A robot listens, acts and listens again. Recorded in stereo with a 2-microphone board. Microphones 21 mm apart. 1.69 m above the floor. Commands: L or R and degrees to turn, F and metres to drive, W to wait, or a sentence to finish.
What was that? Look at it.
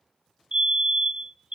R45
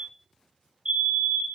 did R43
R85
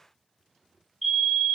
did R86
Found it: a fire alarm, straight ahead, under 1 m away.